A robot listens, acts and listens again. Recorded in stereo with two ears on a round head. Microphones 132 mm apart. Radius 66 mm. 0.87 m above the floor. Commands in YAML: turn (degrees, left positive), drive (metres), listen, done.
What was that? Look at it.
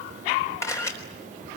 turn: 20
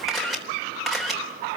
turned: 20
done: "Found it: a camera shutter, straight ahead, 2 to 4 m away."